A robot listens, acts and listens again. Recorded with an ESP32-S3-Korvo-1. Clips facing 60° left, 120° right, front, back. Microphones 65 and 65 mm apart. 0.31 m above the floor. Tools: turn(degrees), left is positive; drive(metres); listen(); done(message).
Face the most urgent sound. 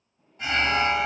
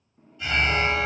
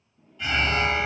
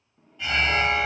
turn(degrees=95)
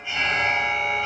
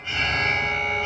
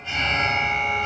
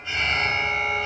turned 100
done("Facing the alarm.")